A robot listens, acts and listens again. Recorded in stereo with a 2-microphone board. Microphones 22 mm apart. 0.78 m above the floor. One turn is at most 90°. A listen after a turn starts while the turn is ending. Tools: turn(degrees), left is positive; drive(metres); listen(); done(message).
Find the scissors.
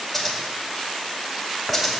turn(degrees=30)
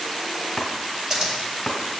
turn(degrees=-30)
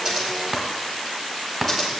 done("Found it: scissors, straight ahead.")